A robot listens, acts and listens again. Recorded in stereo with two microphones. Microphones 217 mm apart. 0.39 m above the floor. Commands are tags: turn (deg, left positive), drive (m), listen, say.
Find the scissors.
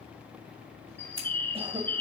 <turn deg="-90"/>
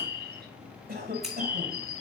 <listen/>
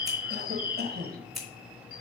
<say>Found it: scissors, straight ahead.</say>